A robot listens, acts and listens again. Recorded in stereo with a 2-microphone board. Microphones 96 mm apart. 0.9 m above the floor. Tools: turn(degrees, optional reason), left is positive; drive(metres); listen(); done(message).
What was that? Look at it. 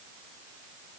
listen()
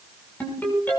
turn(degrees=20, reason="The ringtone: about 20° left or 160° left.")
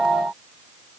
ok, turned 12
listen()
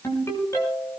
turn(degrees=150, reason="So it is at 150° left.")
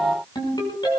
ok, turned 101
turn(degrees=50, reason="The ringtone is now 50° left.")
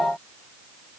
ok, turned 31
turn(degrees=15, reason="Nothing new. It was at 15° left.")
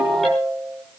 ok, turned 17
done("Found it: a ringtone, straight ahead, over 4 m away.")